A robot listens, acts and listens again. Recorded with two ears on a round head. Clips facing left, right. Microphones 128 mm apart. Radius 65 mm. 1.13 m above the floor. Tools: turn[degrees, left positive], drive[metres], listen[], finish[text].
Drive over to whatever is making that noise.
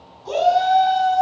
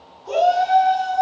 Thought: The shout: about 35° left or 145° left.
Action: turn[35]
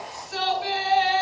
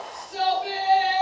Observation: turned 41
Thought: So it is at 100° left.
Action: turn[100]
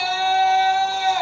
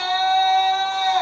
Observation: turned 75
Thought: The shout is now 25° left.
Action: turn[25]
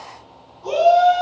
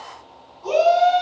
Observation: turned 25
Action: drive[1.0]
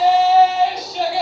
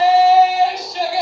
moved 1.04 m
Action: drive[1.0]
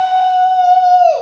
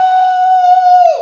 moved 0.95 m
Action: drive[1.0]
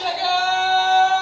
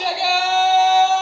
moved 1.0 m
Thought: The shout is now 15° right.
Action: turn[-15]
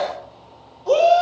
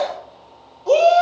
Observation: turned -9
Action: drive[1.0]
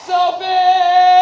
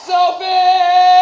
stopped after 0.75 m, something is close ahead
Thought: The shout is now 10° right.
Action: turn[-10]
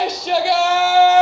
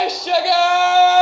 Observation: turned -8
Action: finish[I am next to the shout.]